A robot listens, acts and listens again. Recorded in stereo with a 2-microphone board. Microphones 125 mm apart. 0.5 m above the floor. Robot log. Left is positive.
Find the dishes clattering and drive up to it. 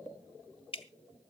cmd idle
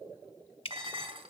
note: The dishes clattering: about 45° right or 135° right.
cmd yaw -45
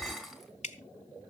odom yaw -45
cmd fwd 1.0
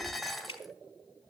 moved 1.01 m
cmd fwd 1.0
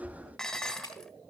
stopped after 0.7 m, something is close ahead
end: Arrived at the dishes clattering, straight ahead.